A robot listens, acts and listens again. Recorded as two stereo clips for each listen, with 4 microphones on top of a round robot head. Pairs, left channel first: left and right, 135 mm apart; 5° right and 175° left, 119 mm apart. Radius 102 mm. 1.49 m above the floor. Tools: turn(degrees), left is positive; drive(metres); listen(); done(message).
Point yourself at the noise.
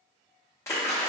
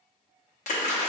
turn(degrees=15)
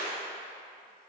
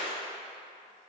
done("Found it: a splash, straight ahead.")